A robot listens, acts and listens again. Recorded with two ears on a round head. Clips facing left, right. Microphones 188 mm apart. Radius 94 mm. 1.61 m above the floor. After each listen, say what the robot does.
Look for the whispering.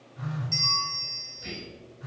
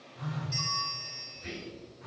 Turn 55° left.
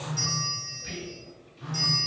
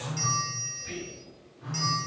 Turn 70° left.
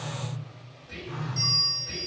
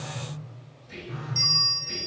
Turn 10° left.
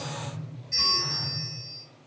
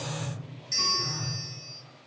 Keep listening.
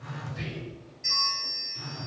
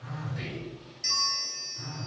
Found it: whispering, straight ahead, 1 to 2 m away.